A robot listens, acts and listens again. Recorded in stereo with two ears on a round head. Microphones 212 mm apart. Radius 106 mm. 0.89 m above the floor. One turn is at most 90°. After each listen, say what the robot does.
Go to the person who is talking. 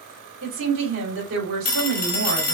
Turn 60° right.
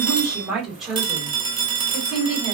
Drive 1.0 m forward.
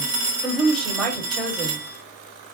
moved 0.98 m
Drive 1.0 m forward.
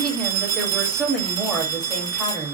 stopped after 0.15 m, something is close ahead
I am next to the woman speaking.